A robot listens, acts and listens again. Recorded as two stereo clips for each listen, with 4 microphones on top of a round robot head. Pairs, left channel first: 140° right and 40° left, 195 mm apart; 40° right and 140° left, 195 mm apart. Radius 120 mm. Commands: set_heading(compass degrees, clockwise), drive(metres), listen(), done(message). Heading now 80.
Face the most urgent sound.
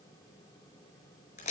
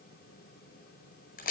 listen()
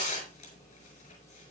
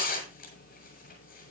listen()
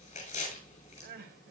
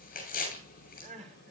set_heading(355)
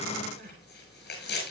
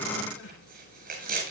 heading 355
listen()
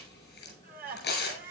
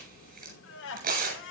set_heading(5)
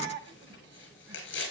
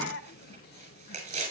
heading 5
done("Found it: crying, straight ahead, 2 to 4 m away.")